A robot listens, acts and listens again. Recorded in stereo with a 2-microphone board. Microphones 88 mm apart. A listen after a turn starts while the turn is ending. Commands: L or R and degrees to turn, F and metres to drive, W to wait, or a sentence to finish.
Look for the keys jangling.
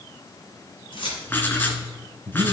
L70
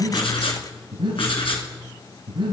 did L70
W
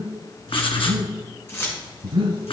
L30
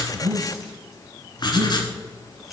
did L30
Facing the keys jangling, 2 to 4 m away.